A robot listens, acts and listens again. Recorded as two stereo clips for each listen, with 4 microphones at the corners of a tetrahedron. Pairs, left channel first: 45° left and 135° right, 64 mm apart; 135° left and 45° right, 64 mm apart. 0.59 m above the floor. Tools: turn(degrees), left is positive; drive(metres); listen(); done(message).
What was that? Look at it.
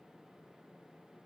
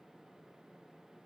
listen()
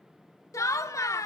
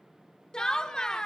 turn(degrees=60)
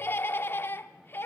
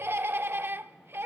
done("Facing the laughter, 1 to 2 m away.")